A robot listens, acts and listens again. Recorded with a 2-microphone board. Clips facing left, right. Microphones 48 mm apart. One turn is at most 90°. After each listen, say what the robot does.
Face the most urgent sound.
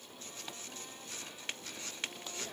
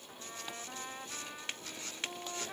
Keep listening.
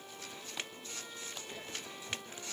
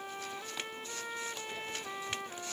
Keep listening.
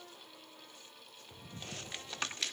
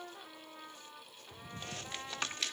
I can't make out anything urgent, only a trumpet.